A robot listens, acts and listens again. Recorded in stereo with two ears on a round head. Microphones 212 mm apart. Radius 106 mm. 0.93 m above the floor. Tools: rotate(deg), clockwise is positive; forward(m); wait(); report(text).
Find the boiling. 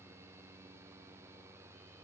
wait()
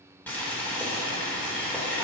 rotate(-30)
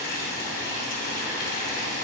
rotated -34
rotate(-140)
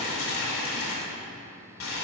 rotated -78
rotate(-60)
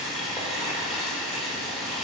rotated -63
report("Found it: boiling, straight ahead, 2 to 4 m away.")